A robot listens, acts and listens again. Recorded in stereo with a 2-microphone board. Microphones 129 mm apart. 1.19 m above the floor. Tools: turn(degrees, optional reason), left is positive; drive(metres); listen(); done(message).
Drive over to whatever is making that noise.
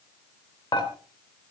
turn(degrees=40, reason="The dishes clattering: about 40° left or 140° left.")
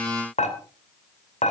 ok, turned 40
turn(degrees=100, reason="So it is at 100° left.")
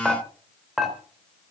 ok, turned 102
drive(metres=1.0)
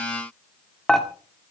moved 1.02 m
drive(metres=1.0)
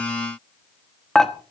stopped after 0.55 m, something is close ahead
done("Arrived at the dishes clattering, straight ahead.")